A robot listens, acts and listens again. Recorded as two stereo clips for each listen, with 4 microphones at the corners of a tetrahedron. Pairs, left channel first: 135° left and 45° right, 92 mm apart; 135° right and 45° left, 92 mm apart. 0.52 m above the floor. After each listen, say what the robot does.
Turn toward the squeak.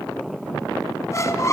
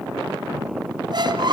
Turn 80° left.
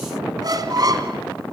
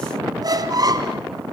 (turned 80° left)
Found it: a squeak, straight ahead.